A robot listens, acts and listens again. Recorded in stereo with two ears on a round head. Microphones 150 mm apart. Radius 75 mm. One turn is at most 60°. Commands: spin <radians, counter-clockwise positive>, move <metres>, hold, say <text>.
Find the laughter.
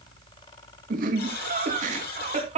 spin -0.70
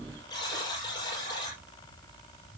hold
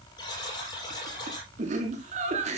spin -0.79
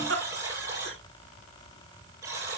spin -1.05
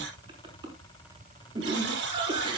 spin -0.52
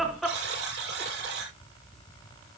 say Facing the laughter, over 4 m away.